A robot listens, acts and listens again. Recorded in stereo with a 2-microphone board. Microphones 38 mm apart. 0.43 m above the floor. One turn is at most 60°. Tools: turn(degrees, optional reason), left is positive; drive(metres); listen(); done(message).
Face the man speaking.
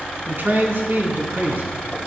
turn(degrees=-60, reason="The man speaking: about 60° right or 120° right.")
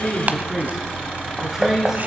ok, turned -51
turn(degrees=-10, reason="So it is at 10° right.")
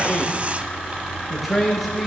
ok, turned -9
done("Facing the man speaking, over 4 m away.")